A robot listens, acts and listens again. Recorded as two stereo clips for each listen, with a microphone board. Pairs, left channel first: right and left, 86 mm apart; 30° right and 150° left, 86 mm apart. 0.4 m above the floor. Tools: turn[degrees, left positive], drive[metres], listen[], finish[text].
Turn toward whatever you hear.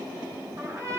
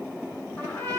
Thought: The trumpet: 30° left.
Action: turn[30]
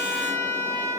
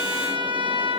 Thought: The trumpet is now 25° right.
Action: turn[-25]
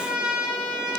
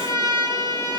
Thought: The trumpet is now 15° left.
Action: turn[15]
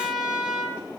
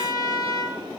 Action: finish[Found it: a trumpet, straight ahead, over 4 m away.]